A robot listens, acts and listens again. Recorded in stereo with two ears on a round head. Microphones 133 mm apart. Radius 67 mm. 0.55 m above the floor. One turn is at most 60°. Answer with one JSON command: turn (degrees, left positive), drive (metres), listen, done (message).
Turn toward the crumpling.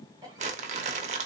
{"turn": -50}
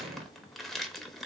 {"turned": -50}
{"done": "Facing the crumpling, under 1 m away."}